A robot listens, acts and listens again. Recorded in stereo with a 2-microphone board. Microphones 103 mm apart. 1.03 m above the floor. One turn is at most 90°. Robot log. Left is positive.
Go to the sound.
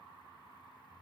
cmd idle
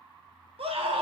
note: The scream: about 65° right or 115° right.
cmd yaw -65
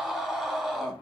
cmd fwd 1.0
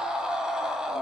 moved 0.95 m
cmd fwd 1.0
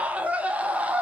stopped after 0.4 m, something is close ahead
note: The scream is now 15° right.
cmd yaw -15
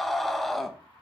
end: I am next to the scream.